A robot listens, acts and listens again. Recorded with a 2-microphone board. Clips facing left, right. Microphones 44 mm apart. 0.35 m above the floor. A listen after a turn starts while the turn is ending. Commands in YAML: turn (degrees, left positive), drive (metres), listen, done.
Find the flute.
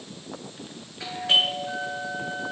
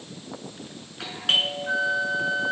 turn: -75
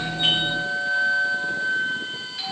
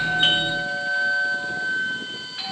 done: "Found it: a flute, straight ahead."